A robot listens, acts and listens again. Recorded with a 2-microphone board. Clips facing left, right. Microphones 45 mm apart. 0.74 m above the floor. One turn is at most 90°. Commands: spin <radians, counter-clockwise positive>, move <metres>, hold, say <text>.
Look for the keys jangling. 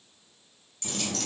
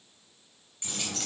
spin -0.35
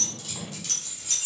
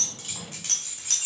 spin -1.57
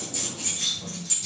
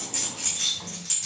spin -0.87
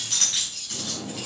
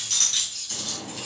spin 0.26
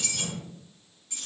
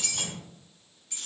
say Facing the keys jangling, over 4 m away.